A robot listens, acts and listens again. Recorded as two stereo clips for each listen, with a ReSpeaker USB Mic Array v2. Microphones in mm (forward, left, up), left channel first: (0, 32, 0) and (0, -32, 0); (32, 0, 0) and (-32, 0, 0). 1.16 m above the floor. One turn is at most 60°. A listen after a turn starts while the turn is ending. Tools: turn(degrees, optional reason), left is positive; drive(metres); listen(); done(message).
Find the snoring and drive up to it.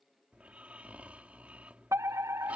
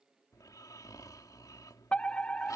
turn(degrees=-25, reason="The snoring: 25° right.")
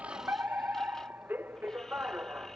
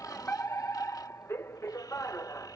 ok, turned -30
listen()
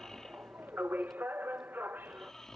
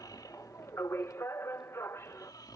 drive(metres=1.0)
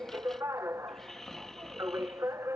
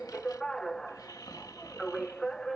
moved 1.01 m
drive(metres=1.0)
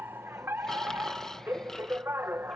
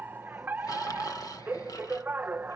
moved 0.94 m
drive(metres=1.0)
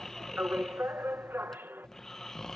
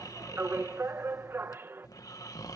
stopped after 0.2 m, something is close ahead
done("Arrived at the snoring, straight ahead.")